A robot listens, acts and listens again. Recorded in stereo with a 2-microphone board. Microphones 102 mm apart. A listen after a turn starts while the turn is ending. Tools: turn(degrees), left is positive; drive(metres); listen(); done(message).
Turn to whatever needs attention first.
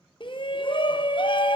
turn(degrees=55)
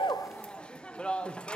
turn(degrees=10)
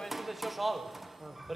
done("Found it: a shout, straight ahead.")